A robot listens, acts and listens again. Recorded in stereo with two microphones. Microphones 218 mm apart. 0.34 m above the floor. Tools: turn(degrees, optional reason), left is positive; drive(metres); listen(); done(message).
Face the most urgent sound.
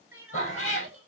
turn(degrees=-90)
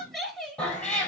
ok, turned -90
done("Found it: crying, straight ahead, 1 to 2 m away.")